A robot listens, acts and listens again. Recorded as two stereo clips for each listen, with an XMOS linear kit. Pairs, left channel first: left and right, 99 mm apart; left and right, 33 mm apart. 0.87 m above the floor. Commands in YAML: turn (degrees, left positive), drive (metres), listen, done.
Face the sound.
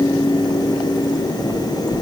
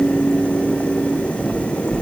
turn: 50
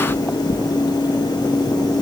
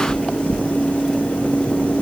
turn: 75
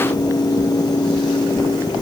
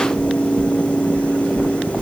turn: -15
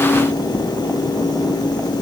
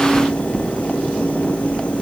done: "Found it: knocking, straight ahead."